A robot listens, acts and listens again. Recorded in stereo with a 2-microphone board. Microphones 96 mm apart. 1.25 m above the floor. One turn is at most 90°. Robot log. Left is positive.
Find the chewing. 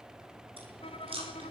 note: The chewing: about 75° right or 105° right.
cmd yaw -75
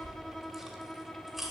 end: Found it: chewing, straight ahead, over 4 m away.